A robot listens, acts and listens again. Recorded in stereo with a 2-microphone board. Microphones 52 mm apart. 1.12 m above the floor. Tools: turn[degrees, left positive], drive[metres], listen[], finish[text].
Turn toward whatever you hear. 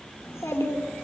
Thought: The child speaking: about 60° left or 120° left.
Action: turn[60]
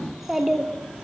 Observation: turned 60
Thought: So it is at 15° right.
Action: turn[-15]
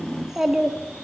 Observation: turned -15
Thought: The child speaking is now 20° right.
Action: turn[-20]
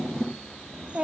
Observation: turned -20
Thought: The child speaking is now 30° right.
Action: turn[-30]
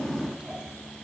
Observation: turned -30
Thought: The child speaking is now 15° right.
Action: turn[-15]
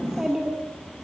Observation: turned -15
Thought: The child speaking is now 10° right.
Action: turn[-10]
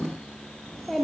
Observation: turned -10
Action: finish[Facing the child speaking.]